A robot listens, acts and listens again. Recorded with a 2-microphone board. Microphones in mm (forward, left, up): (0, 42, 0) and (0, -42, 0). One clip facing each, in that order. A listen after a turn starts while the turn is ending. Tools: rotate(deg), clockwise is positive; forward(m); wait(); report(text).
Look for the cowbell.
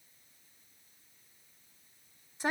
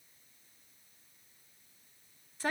wait()
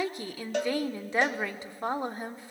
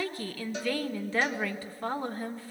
rotate(-65)
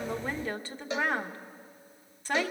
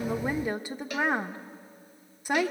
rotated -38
rotate(-25)
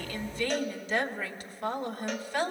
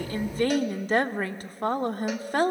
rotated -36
rotate(10)
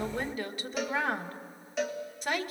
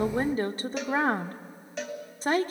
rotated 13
report("Found it: a cowbell, straight ahead.")